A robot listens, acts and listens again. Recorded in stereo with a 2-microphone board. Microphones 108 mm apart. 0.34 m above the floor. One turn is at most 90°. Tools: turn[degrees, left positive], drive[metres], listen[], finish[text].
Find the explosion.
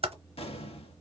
Thought: The explosion: about 70° left or 110° left.
Action: turn[70]
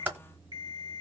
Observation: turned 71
Action: listen[]
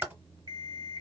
Action: finish[I heard an explosion, but can't make it out now. It was about straight ahead or 40° left.]